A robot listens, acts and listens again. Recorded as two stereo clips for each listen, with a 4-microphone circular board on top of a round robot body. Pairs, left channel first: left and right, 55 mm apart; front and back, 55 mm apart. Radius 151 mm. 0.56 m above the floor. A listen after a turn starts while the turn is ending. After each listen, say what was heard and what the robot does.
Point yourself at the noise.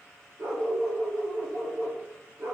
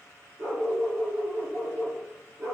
The dog barking: 135° right. Turn 135° right.
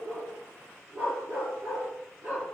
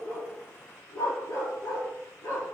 The dog barking is now 35° right. Turn 35° right.
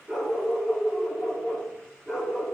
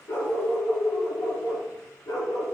Facing the dog barking.